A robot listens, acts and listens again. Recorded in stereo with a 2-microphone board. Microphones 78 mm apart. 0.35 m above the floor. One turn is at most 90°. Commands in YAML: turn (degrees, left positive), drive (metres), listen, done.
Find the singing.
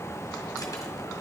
listen: true
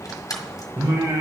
turn: -65
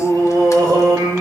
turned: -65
turn: -55
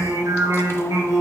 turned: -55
turn: -55
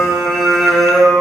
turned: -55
done: "Found it: singing, straight ahead, 2 to 4 m away."